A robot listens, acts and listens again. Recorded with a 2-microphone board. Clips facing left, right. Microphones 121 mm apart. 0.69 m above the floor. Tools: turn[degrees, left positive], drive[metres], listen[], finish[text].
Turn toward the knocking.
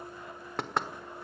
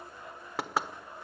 Action: turn[-30]
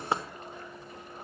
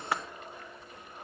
Thought: So it is at 25° left.
Action: turn[25]
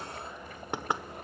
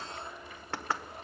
Thought: The knocking is now 15° left.
Action: turn[15]
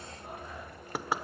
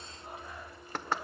Thought: The knocking is now 10° left.
Action: turn[10]
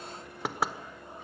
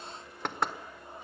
Action: finish[Facing the knocking, 1 to 2 m away.]